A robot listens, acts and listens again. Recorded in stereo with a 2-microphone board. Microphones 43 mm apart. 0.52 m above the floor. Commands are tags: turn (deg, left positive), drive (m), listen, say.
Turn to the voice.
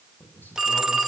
<turn deg="50"/>
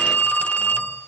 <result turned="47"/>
<listen/>
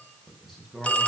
<say>Facing the man speaking.</say>